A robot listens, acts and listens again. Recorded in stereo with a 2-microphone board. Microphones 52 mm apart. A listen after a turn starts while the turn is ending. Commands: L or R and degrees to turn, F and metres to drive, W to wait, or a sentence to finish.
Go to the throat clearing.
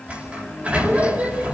W
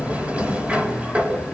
W
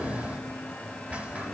I can't make out throat clearing to turn to.